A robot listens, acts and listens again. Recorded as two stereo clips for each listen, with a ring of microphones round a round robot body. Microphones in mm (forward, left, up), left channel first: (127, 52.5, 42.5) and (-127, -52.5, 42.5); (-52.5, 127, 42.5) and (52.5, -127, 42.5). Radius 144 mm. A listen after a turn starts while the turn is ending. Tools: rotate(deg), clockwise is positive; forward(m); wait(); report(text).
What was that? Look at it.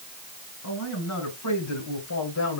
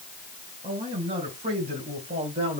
report("Found it: a man speaking, straight ahead.")